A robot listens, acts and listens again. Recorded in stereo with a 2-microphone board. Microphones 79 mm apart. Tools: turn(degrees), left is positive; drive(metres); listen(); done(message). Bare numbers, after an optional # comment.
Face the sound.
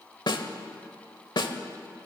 # The snare drum: about 70° left or 110° left.
turn(70)
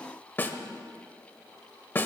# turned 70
# So it is at 30° left.
turn(30)
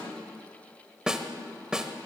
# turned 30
# The snare drum is now 10° right.
turn(-10)
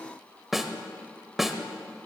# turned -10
done("Facing the snare drum, 1 to 2 m away.")